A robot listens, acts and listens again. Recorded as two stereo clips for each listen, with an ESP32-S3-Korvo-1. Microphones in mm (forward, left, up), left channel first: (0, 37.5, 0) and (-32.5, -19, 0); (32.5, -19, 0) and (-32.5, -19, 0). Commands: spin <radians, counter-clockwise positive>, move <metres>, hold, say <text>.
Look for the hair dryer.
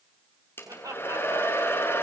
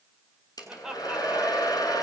say Facing the hair dryer, over 4 m away.